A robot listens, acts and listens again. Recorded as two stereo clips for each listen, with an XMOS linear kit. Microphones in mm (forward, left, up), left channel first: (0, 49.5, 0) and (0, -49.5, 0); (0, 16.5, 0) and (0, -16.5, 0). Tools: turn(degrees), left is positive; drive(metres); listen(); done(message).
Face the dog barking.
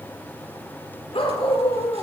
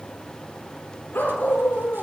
turn(degrees=90)
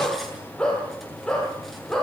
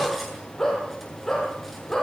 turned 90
done("Found it: a dog barking, straight ahead, over 4 m away.")